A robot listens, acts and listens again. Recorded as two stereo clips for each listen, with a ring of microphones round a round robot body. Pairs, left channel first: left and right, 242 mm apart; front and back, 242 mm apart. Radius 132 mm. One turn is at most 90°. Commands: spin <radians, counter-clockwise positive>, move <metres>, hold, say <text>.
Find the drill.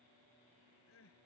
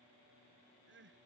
hold
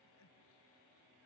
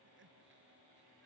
hold
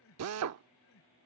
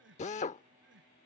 spin -1.13
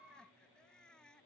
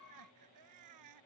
hold
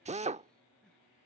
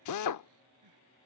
spin -0.44
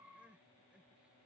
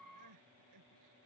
hold
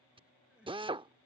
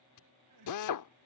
spin -0.35
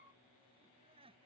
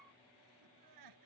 hold
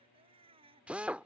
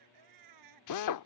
say Facing the drill.